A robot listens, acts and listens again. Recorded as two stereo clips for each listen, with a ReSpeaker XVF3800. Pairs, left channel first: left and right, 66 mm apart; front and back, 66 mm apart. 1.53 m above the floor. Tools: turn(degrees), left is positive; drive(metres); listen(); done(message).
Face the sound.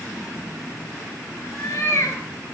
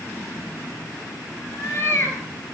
turn(degrees=50)
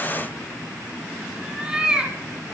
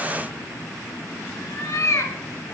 turn(degrees=-20)
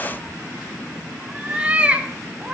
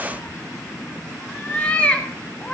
turn(degrees=-45)
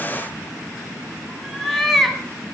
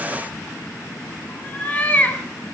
done("Facing the cat meowing.")